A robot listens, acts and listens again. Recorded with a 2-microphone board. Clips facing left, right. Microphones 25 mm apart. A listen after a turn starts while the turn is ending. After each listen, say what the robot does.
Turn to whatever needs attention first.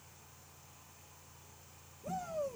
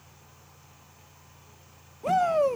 Turn 90° right.
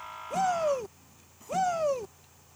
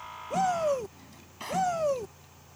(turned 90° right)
Facing the shout.